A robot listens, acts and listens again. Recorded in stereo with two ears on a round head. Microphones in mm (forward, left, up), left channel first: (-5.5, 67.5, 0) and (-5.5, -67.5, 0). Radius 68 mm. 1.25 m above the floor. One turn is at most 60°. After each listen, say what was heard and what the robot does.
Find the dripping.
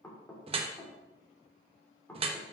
The dripping: about 35° right or 145° right. Turn 35° right.
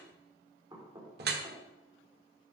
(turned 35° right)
So it is at 105° right. Turn 60° right.
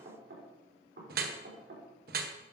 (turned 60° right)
The dripping is now 60° right. Turn 60° right.
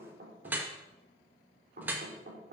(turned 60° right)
The dripping is now 10° right. Turn 10° right.
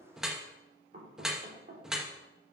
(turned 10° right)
Facing the dripping, 1 to 2 m away.